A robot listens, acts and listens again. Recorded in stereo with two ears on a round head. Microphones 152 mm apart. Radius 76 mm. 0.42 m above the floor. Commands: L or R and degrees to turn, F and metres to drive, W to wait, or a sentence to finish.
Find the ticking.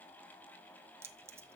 W
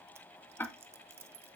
L30
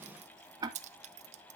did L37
R25
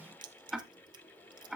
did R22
Facing the ticking.